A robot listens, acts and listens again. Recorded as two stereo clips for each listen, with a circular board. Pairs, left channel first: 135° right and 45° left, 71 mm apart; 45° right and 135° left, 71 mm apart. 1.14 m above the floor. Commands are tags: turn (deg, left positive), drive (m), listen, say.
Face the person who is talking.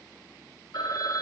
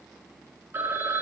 <listen/>
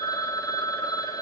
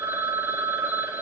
<listen/>
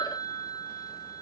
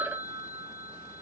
<say>I can't make out anyone speaking, only a phone ringing.</say>